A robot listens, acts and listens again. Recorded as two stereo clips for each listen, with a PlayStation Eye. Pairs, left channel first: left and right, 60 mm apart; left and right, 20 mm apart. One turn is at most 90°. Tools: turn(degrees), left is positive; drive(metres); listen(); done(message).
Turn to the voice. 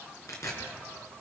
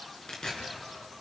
listen()
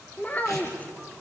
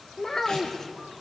turn(degrees=25)
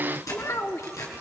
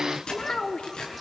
turn(degrees=90)
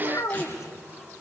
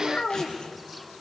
turn(degrees=70)
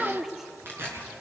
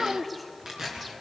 done("Found it: a child speaking, straight ahead, 1 to 2 m away.")